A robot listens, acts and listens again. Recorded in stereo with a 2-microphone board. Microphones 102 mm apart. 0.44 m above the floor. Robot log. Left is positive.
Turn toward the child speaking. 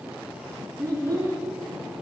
note: The child speaking: about 20° left or 160° left.
cmd yaw +20
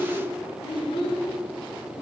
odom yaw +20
note: So it is at 115° left.
cmd yaw +115
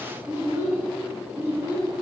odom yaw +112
note: The child speaking is now 25° right.
cmd yaw -25
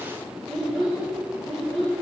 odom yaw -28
end: Facing the child speaking.